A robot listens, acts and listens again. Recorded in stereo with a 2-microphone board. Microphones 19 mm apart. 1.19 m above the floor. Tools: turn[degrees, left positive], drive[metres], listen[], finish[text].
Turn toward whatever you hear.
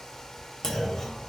Thought: The clunk: about 30° left or 150° left.
Action: turn[30]
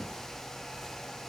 Action: listen[]
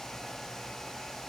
Action: finish[I heard a clunk, but can't make it out now. It was about straight ahead or 120° left.]